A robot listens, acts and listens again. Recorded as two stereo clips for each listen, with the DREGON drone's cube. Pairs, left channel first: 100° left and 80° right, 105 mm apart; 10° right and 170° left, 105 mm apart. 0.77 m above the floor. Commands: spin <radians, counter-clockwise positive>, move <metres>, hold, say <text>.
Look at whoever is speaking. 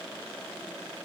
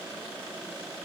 hold
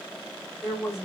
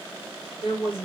say Found it: a woman speaking, straight ahead, 2 to 4 m away.